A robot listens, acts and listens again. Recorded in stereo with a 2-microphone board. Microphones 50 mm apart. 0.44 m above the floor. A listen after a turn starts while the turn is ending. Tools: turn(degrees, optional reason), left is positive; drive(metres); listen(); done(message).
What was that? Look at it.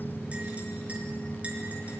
turn(degrees=-25, reason="The clink: about 25° right or 155° right.")
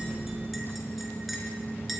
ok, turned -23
listen()
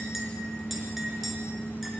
done("Facing the clink, over 4 m away.")